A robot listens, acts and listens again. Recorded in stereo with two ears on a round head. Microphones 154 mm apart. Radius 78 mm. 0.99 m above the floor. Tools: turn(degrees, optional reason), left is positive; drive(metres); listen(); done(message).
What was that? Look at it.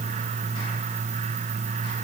listen()
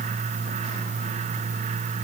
listen()
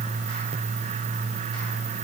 done("I can't make out anything.")